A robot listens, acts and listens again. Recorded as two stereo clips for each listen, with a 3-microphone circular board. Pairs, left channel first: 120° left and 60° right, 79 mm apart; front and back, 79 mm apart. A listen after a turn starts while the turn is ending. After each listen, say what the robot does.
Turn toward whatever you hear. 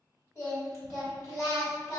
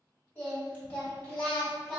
Turn 85° left.
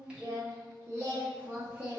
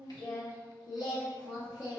Turn 10° left.
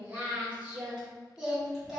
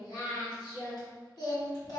Turn 30° left.
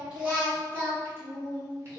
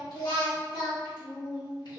Turn 10° right.
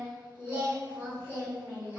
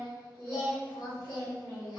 Found it: singing, straight ahead, 1 to 2 m away.